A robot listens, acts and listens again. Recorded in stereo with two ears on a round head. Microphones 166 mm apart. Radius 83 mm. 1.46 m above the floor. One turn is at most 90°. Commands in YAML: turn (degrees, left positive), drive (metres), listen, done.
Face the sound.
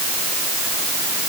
listen: true
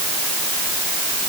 listen: true
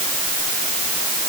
done: "I can't make out anything."